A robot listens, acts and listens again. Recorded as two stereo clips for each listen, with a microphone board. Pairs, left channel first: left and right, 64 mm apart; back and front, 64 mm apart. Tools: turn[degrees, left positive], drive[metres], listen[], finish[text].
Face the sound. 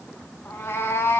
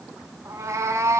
Thought: The cat meowing: 40° left.
Action: turn[40]
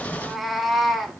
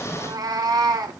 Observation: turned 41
Action: finish[Found it: a cat meowing, straight ahead, 1 to 2 m away.]